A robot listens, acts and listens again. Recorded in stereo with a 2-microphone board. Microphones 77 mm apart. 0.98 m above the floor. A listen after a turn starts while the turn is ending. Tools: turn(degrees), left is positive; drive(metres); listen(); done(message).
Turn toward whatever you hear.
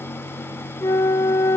turn(degrees=40)
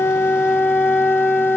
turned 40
turn(degrees=10)
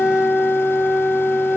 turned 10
done("Found it: a flute, straight ahead.")